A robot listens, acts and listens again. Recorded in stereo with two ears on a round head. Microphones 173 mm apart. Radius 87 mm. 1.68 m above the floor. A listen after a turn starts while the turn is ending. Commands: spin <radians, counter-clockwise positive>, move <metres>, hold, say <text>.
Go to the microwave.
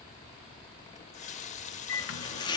spin 1.31
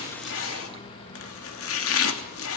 spin 0.52
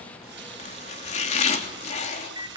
spin -0.35
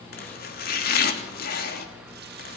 move 1.0
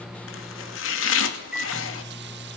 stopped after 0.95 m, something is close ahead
say Arrived at the microwave, straight ahead.